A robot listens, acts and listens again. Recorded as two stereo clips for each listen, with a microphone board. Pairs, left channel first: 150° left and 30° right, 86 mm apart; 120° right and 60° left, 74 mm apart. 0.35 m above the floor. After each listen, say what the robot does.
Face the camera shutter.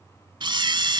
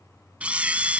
Turn 10° right.
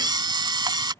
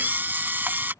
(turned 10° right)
Found it: a camera shutter, straight ahead.